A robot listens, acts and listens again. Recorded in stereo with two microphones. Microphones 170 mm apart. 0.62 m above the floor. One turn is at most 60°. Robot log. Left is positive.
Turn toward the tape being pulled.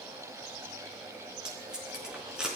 cmd yaw -30
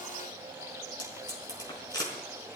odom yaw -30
note: So it is at 25° left.
cmd yaw +25
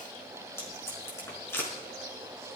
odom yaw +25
note: The tape being pulled is now 15° left.
cmd yaw +15
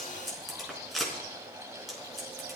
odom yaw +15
end: Found it: tape being pulled, straight ahead, over 4 m away.